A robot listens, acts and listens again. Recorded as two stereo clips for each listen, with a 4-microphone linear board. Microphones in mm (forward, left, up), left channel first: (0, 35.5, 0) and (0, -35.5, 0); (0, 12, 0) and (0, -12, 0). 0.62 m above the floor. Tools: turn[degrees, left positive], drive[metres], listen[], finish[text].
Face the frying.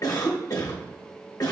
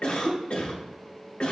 Action: listen[]
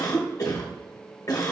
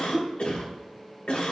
Action: listen[]
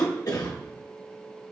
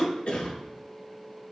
Action: finish[I can't make out frying, only a cough.]